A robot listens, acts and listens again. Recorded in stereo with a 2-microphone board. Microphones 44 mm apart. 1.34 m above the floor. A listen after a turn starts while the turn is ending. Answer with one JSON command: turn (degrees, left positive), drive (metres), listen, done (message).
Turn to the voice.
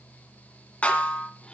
{"listen": true}
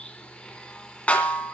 {"listen": true}
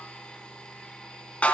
{"done": "I can't make out anyone speaking, only a snare drum and a blender."}